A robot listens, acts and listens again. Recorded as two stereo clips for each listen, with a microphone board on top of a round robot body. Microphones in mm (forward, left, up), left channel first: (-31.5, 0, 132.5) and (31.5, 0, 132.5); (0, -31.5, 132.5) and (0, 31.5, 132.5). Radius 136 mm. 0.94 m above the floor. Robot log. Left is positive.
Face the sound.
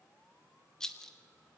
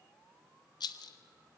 note: The rattle: 100° right.
cmd yaw -100
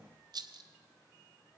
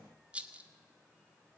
note: The rattle is now 15° left.
cmd yaw +15
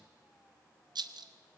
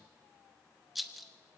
end: Facing the rattle.